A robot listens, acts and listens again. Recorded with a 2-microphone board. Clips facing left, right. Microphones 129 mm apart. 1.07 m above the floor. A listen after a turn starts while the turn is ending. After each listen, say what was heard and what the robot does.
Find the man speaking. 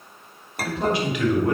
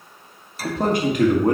The man speaking: about 45° right or 135° right. Turn 45° right.
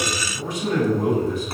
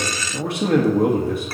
So it is at 115° right. Turn 115° right.
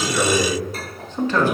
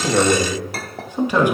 The man speaking is now 15° right. Turn 15° right.
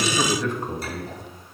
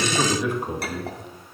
The man speaking is now 15° right. Turn 15° right.
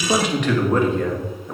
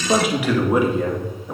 The man speaking is now 10° right. Turn 10° right.
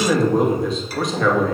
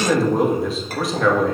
Facing the man speaking, 2 to 4 m away.